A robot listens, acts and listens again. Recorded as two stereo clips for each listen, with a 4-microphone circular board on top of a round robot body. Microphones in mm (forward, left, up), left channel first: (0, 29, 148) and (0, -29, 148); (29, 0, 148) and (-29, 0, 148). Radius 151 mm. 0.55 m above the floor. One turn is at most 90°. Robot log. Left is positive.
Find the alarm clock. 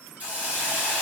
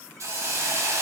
cmd idle
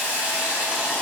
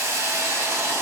cmd idle
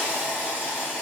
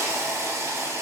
end: I can't make out an alarm clock, only a hiss.